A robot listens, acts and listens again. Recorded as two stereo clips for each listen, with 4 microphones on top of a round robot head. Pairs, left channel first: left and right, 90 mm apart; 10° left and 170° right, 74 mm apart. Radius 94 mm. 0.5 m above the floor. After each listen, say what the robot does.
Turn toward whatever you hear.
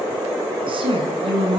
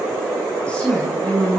Turn 60° right.
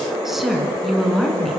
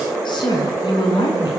Found it: a woman speaking, straight ahead, over 4 m away.